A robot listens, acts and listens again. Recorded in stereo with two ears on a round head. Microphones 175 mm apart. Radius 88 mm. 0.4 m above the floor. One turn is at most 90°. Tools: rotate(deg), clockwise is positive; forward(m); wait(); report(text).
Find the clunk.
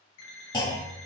rotate(-25)
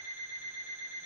wait()
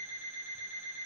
report("I heard a clunk, but can't make it out now. It was about straight ahead or 130° left.")